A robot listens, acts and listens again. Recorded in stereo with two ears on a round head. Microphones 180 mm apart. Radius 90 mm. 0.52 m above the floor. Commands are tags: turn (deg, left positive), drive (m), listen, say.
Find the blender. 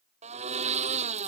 <turn deg="-35"/>
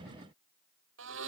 <turn deg="-110"/>
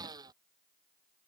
<turn deg="-20"/>
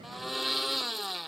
<say>Found it: a blender, straight ahead.</say>